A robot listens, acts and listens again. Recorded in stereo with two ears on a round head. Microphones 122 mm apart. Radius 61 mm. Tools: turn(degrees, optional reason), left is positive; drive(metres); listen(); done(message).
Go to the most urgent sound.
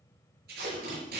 listen()
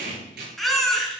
turn(degrees=30)
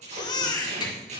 turn(degrees=145, reason="So it is at 145° left.")
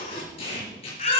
turn(degrees=45, reason="The baby crying is now 45° left.")
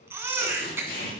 turn(degrees=-15, reason="The baby crying is now 15° right.")
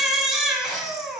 drive(metres=1.0)
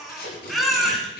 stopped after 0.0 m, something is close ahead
done("Something is in my way. I am facing the baby crying but have not reached it.")